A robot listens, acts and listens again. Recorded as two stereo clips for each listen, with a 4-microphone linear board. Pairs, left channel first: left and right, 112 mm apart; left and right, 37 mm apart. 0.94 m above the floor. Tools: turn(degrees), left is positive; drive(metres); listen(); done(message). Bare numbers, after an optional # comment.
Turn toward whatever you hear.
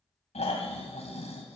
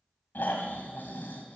# The snoring: about 75° left or 105° left.
turn(75)
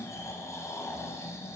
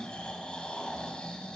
# So it is at 30° left.
turn(30)
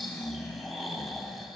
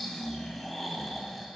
done("Facing the snoring.")